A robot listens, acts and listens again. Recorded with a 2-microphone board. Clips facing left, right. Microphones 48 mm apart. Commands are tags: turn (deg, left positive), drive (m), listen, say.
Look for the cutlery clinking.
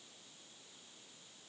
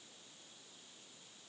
<listen/>
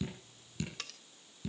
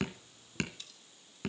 <turn deg="70"/>
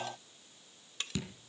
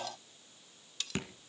<turn deg="30"/>
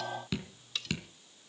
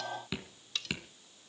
<say>Found it: cutlery clinking, straight ahead, under 1 m away.</say>